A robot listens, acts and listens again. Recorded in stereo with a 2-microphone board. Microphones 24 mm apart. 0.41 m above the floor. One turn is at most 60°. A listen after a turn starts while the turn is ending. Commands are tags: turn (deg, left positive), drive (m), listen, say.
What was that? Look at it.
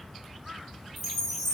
<turn deg="30"/>
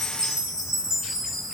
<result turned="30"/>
<turn deg="-25"/>
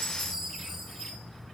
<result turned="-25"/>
<turn deg="-20"/>
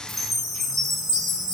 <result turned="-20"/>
<say>Facing the chime, 2 to 4 m away.</say>